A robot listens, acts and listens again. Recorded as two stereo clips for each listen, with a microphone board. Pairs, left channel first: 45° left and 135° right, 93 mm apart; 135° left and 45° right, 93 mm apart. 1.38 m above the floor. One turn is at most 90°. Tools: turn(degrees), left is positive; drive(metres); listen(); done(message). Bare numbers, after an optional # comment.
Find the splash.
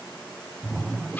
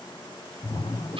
# The splash: 135° left.
turn(90)
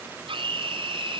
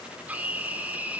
# Nothing new. It was at 45° left.
turn(45)
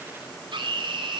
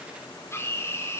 done("I heard a splash from this way, but can't make it out now.")